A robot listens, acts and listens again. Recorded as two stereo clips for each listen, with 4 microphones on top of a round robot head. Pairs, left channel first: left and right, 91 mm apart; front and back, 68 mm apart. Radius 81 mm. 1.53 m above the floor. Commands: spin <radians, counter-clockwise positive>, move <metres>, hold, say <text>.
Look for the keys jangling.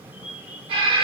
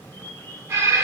hold
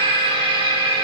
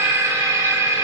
hold
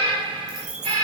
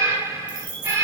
spin -2.53
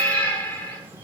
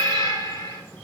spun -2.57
hold
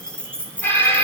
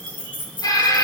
spin 0.17
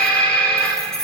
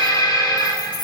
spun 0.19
say Found it: keys jangling, straight ahead, 2 to 4 m away.